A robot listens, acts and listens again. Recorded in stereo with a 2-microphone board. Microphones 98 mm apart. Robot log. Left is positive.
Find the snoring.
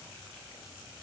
cmd idle
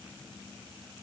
cmd idle
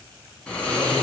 cmd yaw +30
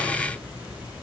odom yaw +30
note: So it is at 20° right.
cmd yaw -20
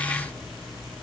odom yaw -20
end: Facing the snoring.